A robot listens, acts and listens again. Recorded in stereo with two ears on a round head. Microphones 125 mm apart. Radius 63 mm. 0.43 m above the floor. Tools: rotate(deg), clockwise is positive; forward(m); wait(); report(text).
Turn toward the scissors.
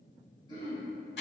wait()
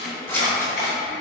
rotate(-15)
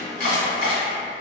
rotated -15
wait()
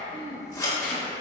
rotate(-150)
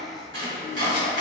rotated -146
wait()
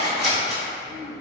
report("Facing the scissors, under 1 m away.")